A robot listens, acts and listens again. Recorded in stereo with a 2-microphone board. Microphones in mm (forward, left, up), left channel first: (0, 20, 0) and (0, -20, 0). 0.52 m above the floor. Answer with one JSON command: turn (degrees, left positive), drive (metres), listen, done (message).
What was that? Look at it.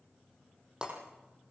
{"turn": -15}
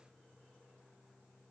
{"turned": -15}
{"listen": true}
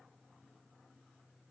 {"done": "I heard breaking glass, but can't make it out now. It was about straight ahead or 150° right."}